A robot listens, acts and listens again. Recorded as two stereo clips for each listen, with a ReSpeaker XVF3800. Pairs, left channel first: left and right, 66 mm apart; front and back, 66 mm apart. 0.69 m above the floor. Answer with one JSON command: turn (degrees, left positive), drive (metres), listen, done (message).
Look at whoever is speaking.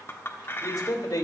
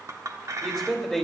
{"turn": 100}
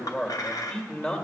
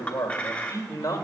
{"turn": 25}
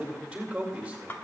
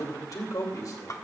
{"turn": -10}
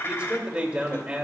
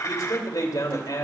{"done": "Facing the man speaking."}